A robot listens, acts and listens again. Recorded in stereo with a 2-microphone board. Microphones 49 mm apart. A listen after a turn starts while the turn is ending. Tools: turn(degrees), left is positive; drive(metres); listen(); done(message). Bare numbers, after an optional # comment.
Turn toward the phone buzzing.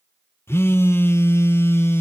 # The phone buzzing: about 60° left or 120° left.
turn(60)
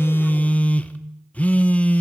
# So it is at 35° left.
turn(35)
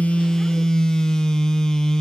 # The phone buzzing is now 15° left.
turn(15)
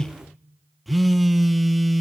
done("Found it: a phone buzzing, straight ahead, under 1 m away.")